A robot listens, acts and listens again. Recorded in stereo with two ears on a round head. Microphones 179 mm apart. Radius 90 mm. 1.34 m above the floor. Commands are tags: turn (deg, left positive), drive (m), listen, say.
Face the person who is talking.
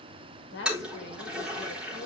<turn deg="65"/>
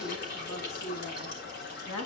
<turn deg="80"/>
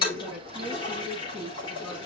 <say>Found it: a woman speaking, straight ahead.</say>